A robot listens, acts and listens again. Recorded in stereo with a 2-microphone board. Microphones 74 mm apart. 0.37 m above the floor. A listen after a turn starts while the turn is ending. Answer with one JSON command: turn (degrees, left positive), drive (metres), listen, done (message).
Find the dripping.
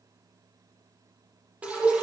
{"turn": -15}
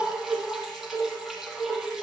{"done": "Found it: dripping, straight ahead, 2 to 4 m away."}